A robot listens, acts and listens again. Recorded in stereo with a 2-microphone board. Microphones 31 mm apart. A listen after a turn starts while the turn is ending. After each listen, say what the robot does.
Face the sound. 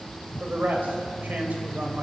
Turn 90° right.
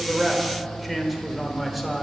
Facing the man speaking.